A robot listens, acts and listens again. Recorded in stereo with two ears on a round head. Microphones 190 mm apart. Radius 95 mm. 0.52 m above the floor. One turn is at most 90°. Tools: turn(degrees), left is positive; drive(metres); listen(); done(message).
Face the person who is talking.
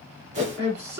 turn(degrees=-50)
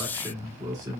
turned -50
turn(degrees=-20)
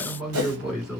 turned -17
done("Facing the man speaking, 2 to 4 m away.")